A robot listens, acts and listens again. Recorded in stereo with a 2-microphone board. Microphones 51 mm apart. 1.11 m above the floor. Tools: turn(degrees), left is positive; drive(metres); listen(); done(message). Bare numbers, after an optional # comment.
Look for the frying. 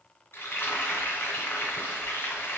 # The frying: about 45° left or 135° left.
turn(45)
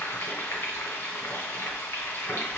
# So it is at 75° left.
turn(75)
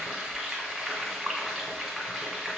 done("Found it: frying, straight ahead, 1 to 2 m away.")